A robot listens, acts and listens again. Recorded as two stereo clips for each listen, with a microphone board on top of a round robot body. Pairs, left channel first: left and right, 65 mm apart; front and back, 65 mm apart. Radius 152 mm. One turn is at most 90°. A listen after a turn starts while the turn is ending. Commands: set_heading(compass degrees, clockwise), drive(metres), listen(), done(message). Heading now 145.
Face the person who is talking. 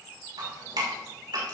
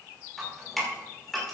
listen()
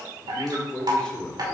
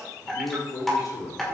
set_heading(130)
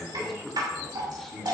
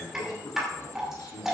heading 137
done("Facing the man speaking, 2 to 4 m away.")